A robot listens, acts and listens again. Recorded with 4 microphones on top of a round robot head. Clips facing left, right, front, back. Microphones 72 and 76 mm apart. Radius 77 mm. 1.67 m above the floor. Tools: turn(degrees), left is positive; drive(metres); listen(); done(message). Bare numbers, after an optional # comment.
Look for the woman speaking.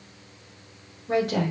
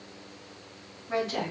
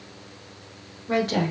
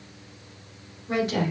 # The woman speaking: 40° left.
turn(40)
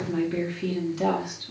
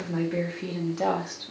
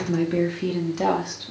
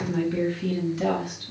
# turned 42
# The woman speaking is now 35° right.
turn(-35)
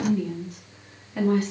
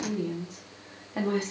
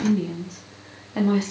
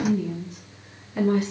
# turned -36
# The woman speaking is now 35° right.
turn(-35)
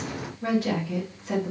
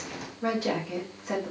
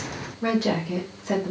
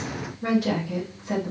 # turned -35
# The woman speaking is now 15° right.
turn(-15)
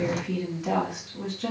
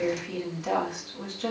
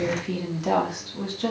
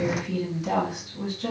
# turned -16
done("Facing the woman speaking.")